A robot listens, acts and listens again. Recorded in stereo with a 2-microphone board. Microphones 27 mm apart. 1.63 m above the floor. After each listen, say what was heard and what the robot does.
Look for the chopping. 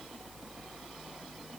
Keep listening.
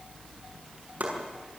Turn 90° right.
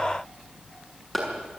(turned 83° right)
Facing the chopping, over 4 m away.